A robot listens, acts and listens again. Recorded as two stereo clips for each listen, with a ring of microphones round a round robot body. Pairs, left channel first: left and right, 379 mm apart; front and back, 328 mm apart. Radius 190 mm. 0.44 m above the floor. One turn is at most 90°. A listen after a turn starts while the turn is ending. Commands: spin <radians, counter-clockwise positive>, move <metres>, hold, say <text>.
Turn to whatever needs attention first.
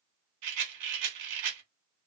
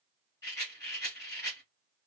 hold
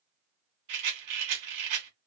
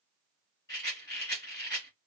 hold
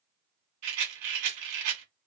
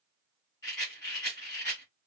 say I can't make out anything urgent, only a rattle.